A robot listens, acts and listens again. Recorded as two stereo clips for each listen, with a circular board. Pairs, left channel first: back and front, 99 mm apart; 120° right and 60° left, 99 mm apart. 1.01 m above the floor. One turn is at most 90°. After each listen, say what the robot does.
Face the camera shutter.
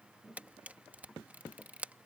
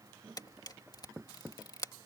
Turn 75° right.
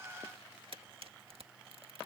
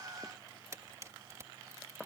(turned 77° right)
Keep listening.
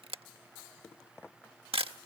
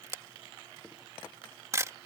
Found it: a camera shutter, straight ahead.